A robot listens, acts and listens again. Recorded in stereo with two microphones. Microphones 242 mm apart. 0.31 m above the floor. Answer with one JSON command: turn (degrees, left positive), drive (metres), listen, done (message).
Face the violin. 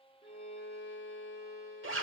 {"turn": 45}
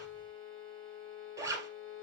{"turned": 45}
{"done": "Facing the violin."}